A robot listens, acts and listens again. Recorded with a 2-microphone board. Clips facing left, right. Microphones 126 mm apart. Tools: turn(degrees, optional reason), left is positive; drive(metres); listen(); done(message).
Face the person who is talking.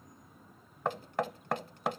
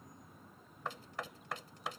listen()
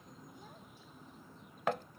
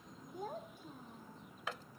turn(degrees=-55, reason="The child speaking: about 55° right or 125° right.")
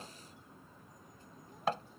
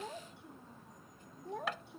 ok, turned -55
turn(degrees=-70, reason="So it is at 70° right.")
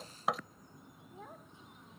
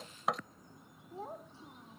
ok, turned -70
turn(degrees=-30, reason="The child speaking is now 30° right.")
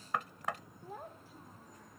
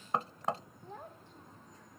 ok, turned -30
done("Found it: a child speaking, straight ahead.")